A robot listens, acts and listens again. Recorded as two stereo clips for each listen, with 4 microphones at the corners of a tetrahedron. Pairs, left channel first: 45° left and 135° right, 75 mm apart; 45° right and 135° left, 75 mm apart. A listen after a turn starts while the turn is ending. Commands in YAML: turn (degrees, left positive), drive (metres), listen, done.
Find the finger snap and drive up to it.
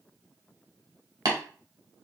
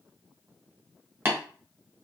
listen: true
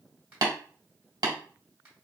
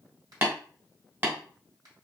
turn: 160
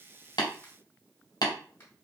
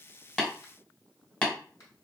turn: -10
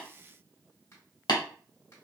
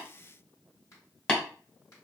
drive: 1.0
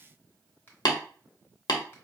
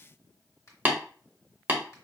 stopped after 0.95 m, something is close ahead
turn: -10
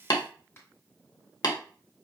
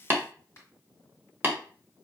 done: "Arrived at the finger snap, straight ahead."